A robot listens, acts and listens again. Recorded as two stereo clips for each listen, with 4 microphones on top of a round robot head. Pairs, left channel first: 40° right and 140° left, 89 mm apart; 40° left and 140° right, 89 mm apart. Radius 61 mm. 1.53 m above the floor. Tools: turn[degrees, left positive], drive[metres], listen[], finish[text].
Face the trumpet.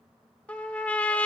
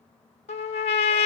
Thought: The trumpet: 35° left.
Action: turn[35]
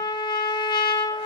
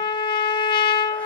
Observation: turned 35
Action: finish[Found it: a trumpet, straight ahead.]